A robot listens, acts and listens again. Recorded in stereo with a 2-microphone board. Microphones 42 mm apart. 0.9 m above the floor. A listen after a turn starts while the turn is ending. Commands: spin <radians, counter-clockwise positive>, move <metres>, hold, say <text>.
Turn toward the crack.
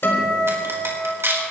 spin -1.22
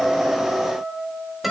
hold
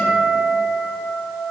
say I heard a crack, but can't make it out now. It was about straight ahead or 40° right.